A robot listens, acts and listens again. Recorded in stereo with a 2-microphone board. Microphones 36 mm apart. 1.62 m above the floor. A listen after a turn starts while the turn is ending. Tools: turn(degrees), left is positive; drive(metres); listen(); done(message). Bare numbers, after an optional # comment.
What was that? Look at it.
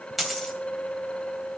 turn(30)
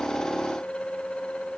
listen()
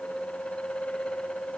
done("I heard a dropped coin, but can't make it out now. It was about 30° right or 150° left.")